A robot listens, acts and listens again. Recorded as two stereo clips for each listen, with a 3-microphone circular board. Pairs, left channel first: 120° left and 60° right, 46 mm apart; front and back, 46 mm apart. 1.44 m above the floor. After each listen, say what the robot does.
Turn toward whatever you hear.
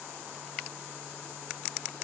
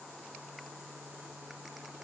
Keep listening.
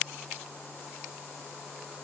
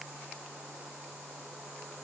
Keep listening.
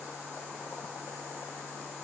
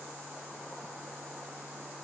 I can't make out anything to turn to.